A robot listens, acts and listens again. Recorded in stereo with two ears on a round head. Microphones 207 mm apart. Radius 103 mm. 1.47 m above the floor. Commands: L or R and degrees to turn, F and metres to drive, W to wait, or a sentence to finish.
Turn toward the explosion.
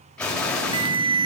L30
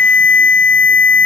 W
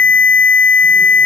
I heard an explosion, but can't make it out now. It was about 25° right or 145° left.